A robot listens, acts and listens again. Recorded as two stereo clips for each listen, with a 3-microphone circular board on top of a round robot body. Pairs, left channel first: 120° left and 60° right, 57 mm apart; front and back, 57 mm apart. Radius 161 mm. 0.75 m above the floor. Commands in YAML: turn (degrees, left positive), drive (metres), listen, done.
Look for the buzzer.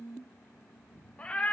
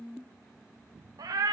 listen: true
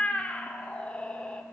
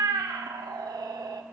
listen: true
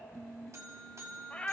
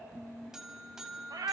turn: -100
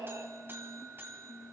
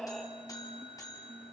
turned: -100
turn: -10
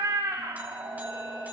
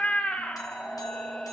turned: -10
listen: true
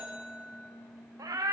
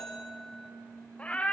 done: "Found it: a buzzer, straight ahead, 1 to 2 m away."